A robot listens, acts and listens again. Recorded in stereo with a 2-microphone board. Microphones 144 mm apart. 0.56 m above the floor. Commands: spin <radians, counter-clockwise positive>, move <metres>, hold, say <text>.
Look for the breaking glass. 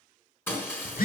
spin 0.26
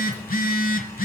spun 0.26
hold
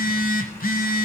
say I heard breaking glass, but can't make it out now. It was about straight ahead or 150° left.